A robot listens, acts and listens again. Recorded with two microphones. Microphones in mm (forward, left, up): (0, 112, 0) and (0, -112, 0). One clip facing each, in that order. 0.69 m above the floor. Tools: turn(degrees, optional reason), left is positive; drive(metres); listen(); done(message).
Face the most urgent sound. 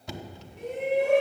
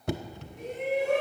turn(degrees=70, reason="The shout: about 70° left or 110° left.")
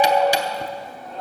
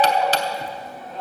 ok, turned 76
done("Facing the shout, 2 to 4 m away.")